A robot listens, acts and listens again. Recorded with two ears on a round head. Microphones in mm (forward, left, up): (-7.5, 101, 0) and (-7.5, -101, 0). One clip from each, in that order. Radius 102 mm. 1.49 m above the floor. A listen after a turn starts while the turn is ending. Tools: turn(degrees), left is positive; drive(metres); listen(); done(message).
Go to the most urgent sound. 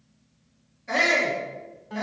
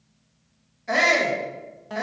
turn(degrees=-25)
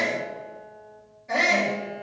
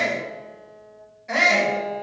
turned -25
turn(degrees=-130)
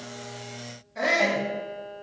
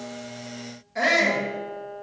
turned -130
turn(degrees=-50)
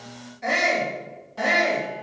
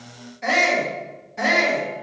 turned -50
turn(degrees=-15)
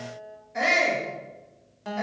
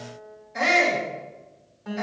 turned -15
drive(metres=1.0)
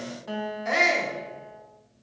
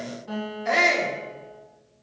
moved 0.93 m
drive(metres=1.0)
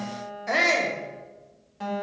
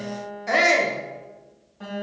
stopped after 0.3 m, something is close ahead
done("I am next to the shout.")